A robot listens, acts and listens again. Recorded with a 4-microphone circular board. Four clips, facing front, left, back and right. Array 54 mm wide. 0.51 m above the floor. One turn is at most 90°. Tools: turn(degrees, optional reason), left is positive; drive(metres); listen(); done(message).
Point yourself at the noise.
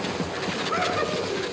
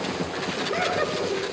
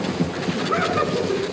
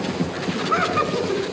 turn(degrees=-90, reason="The laughter: 100° right.")
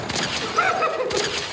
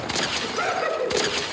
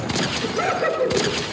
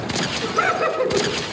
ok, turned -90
turn(degrees=-35, reason="The laughter is now 35° right.")
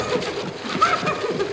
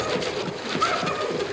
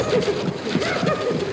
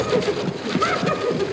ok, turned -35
done("Found it: laughter, straight ahead, over 4 m away.")